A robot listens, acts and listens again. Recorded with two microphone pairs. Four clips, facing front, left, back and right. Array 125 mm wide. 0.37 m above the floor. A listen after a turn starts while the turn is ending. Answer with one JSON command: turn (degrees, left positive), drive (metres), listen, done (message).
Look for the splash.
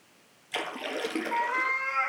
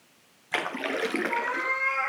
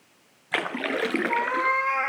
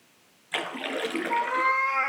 {"turn": 155}
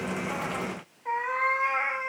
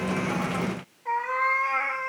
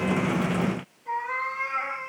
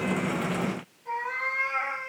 {"done": "I heard a splash from this way, but can't make it out now."}